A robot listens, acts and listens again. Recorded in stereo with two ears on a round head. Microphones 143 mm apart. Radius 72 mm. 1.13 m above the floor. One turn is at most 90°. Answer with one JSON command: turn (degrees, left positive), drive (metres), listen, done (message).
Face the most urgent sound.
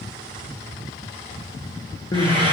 {"turn": 25}
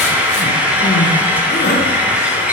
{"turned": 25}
{"turn": 90}
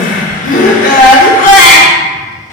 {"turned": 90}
{"turn": 55}
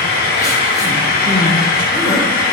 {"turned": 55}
{"listen": true}
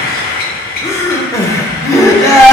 {"turn": 20}
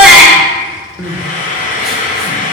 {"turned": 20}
{"done": "Found it: crying, straight ahead."}